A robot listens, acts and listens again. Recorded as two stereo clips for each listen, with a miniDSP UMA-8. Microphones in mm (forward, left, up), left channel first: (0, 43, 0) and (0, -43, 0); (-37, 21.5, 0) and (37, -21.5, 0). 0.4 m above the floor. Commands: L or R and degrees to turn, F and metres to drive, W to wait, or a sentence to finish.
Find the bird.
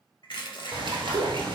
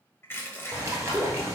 R85
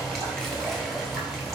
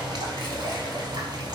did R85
Found it: a bird, straight ahead, 1 to 2 m away.